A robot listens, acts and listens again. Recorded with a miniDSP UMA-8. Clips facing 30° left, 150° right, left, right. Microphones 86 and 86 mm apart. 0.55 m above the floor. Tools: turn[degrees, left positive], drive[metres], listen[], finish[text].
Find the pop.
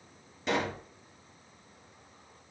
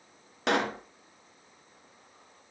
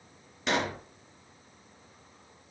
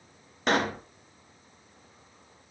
Thought: The pop: 135° right.
Action: turn[-135]
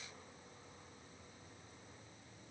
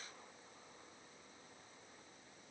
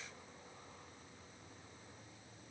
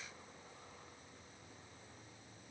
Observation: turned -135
Action: finish[Facing where the pop came from. I can't hear it now.]